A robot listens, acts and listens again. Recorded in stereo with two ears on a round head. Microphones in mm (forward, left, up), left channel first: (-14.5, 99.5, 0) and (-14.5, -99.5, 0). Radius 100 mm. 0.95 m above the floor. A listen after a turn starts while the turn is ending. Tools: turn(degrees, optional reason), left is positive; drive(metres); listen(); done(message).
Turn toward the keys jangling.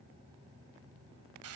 listen()
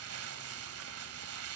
listen()
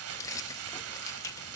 turn(degrees=30)
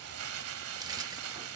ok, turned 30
listen()
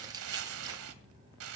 turn(degrees=-15, reason="So it is at 15° right.")
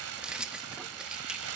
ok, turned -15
done("Found it: keys jangling, straight ahead, under 1 m away.")